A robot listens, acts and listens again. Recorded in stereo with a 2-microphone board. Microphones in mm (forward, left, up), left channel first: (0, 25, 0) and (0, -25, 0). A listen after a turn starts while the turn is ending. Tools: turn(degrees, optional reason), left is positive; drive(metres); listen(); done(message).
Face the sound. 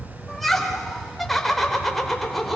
turn(degrees=30)
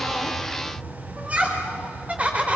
turn(degrees=-25, reason="So it is at 25° right.")
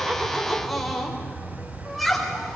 done("Found it: laughter, straight ahead.")